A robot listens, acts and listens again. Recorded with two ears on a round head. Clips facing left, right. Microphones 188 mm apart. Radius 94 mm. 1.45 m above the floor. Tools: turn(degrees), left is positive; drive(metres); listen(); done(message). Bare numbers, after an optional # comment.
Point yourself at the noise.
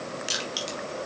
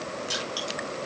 # The crushing: about 30° left or 150° left.
turn(30)
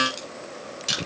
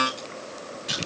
# So it is at 120° left.
turn(120)
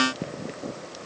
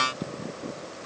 listen()
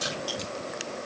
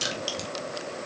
# The crushing is now 35° right.
turn(-35)
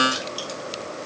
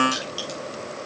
done("Facing the crushing, 2 to 4 m away.")